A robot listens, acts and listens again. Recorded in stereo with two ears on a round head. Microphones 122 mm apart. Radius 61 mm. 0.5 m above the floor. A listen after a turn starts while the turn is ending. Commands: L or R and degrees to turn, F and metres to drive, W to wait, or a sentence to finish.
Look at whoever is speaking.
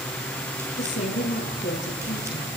L60
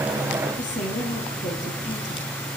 L60
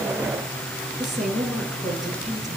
Facing the woman speaking, over 4 m away.